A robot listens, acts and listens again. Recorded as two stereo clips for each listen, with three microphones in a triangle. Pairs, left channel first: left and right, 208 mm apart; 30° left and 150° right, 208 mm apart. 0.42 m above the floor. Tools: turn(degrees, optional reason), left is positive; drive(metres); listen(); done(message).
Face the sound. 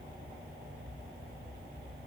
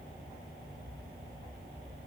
listen()
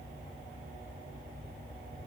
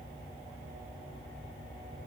listen()
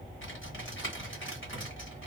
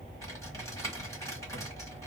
turn(degrees=105, reason="The typing on a keyboard: 105° left.")
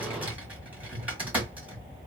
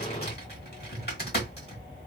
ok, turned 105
turn(degrees=-10, reason="The typing on a keyboard is now 10° right.")
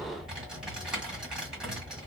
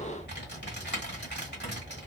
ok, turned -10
done("Facing the typing on a keyboard, 1 to 2 m away.")